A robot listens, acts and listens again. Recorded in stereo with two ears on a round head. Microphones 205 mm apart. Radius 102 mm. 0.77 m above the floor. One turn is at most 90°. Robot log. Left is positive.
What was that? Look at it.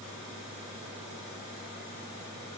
cmd idle
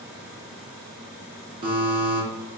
note: The buzzer: about 25° right or 155° right.
cmd yaw -25
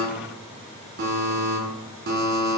note: So it is at 130° right.
cmd yaw -90
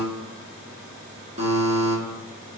note: The buzzer is now 35° right.
cmd yaw -35
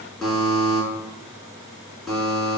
end: Facing the buzzer, 1 to 2 m away.